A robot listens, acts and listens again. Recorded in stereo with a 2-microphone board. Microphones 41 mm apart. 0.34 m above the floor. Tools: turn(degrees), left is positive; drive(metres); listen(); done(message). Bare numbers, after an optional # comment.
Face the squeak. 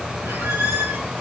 turn(-90)
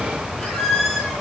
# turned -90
done("Facing the squeak, over 4 m away.")